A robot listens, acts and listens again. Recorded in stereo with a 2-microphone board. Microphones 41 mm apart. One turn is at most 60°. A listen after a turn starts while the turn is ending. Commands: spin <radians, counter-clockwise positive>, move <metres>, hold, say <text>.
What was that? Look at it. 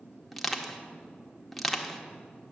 spin 0.52
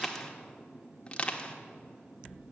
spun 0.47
spin 1.05
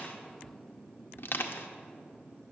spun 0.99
spin 1.05
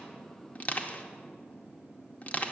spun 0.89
spin 0.79
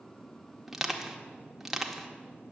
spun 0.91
spin -0.17
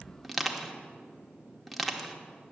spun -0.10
say Facing the crushing.